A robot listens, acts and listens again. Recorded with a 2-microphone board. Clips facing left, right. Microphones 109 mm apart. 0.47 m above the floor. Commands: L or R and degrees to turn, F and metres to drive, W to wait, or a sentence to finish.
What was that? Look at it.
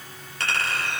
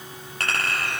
R50
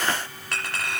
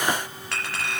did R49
Facing the clink.